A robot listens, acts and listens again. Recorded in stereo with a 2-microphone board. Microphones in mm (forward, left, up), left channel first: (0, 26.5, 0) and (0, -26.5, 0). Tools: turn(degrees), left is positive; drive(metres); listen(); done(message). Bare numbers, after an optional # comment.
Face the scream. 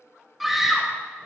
turn(30)
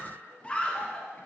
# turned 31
# So it is at 150° left.
turn(150)
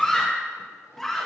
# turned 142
# The scream is now 10° left.
turn(10)
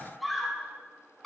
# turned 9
done("Facing the scream, 1 to 2 m away.")